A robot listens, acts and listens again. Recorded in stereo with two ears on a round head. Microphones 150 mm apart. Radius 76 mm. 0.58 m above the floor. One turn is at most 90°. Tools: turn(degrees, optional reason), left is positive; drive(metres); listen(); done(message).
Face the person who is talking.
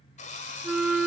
listen()
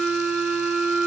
listen()
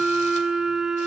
done("I can't make out anyone speaking to turn to.")